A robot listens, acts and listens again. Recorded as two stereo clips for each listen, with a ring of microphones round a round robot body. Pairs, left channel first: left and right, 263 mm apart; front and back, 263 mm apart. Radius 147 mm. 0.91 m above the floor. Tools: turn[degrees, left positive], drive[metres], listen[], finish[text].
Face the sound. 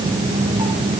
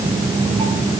Action: listen[]
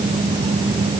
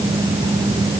Action: listen[]
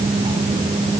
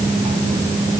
Action: finish[I can't make out anything.]